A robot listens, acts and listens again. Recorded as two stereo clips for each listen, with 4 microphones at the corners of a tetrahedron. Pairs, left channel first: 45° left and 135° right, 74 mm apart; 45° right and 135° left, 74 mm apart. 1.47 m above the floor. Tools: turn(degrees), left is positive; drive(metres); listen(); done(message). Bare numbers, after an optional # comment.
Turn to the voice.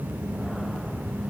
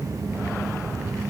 listen()
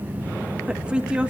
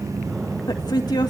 # The woman speaking: 60° right.
turn(-60)
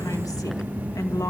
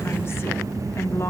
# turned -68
# The woman speaking is now 10° left.
turn(10)
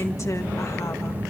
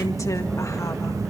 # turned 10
done("Found it: a woman speaking, straight ahead.")